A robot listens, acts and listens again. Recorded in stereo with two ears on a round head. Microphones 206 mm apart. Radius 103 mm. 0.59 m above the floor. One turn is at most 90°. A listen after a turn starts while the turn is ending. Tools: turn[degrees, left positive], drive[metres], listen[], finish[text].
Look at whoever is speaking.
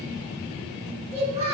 Thought: The child speaking: about 25° right or 155° right.
Action: turn[-25]
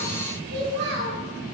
Thought: So it is at 125° right.
Action: turn[-90]
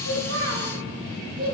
Thought: The child speaking is now 25° right.
Action: turn[-25]
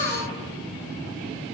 Action: listen[]
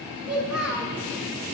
Action: finish[Found it: a child speaking, straight ahead, 1 to 2 m away.]